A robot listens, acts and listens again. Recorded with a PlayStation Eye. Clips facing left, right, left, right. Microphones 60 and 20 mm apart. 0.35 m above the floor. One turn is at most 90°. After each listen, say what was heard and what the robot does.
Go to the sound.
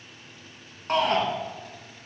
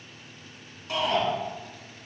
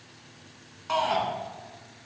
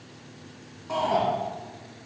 The shout: about 50° left or 130° left. Turn 50° left.
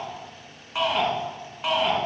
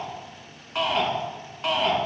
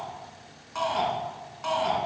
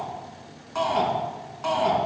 Drive 1.0 m forward.
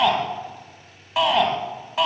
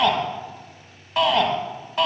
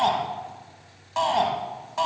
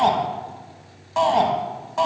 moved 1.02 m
Drive 1.0 m forward.
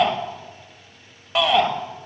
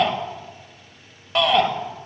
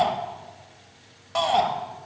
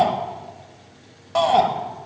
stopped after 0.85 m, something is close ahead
Arrived at the shout, straight ahead.